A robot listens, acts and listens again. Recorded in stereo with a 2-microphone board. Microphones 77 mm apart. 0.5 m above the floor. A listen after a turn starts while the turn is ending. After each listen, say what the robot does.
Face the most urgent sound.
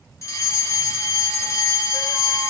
Turn 40° left.
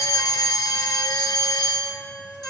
Turn 90° left.
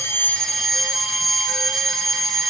Facing the fire alarm, 2 to 4 m away.